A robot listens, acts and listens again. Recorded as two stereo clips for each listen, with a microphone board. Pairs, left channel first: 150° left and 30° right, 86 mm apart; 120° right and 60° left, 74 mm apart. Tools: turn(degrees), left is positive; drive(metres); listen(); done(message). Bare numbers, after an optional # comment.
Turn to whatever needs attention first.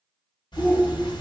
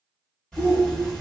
# The shout: 155° right.
turn(-155)
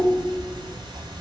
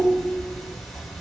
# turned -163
# The shout is now 10° left.
turn(10)
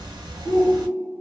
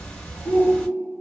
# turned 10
done("Found it: a shout, straight ahead, 1 to 2 m away.")